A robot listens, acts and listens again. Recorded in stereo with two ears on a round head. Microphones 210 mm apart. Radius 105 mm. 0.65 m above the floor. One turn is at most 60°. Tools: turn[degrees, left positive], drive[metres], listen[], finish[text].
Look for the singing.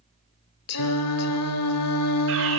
Thought: The singing: about 75° left or 105° left.
Action: turn[60]
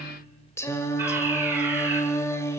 Thought: So it is at 10° left.
Action: turn[10]
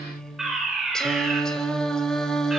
Action: finish[Found it: singing, straight ahead, 1 to 2 m away.]